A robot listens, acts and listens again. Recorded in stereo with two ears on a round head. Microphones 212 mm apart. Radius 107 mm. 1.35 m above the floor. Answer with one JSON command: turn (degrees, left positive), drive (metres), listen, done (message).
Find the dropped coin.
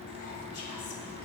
{"listen": true}
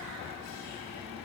{"listen": true}
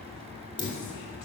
{"turn": 20}
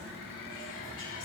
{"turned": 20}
{"listen": true}
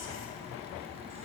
{"done": "I heard a dropped coin, but can't make it out now. It was about straight ahead or 140° left."}